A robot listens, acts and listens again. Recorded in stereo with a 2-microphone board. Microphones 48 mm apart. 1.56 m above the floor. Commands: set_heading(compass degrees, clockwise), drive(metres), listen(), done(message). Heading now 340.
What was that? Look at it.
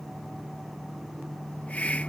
set_heading(310)
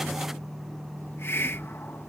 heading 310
set_heading(190)
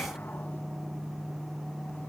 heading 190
listen()
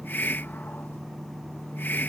set_heading(145)
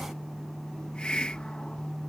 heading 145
set_heading(125)
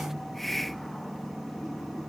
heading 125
done("Facing the hiss.")